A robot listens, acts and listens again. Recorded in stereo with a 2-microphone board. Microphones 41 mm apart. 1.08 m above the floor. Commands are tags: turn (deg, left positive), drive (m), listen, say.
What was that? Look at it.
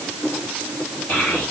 <turn deg="55"/>
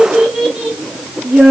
<turn deg="-35"/>
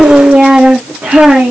<turn deg="-40"/>
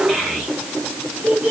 <turn deg="-20"/>
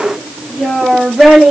<say>Facing the child speaking, 1 to 2 m away.</say>